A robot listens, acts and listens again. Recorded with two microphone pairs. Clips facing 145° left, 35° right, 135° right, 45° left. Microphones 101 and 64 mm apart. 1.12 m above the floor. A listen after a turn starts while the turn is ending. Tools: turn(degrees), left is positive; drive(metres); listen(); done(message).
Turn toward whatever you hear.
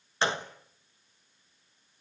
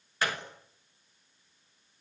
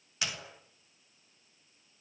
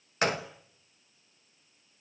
turn(degrees=85)
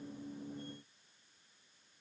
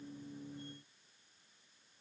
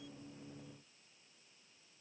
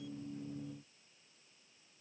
done("I heard a gunshot from this way, but can't make it out now.")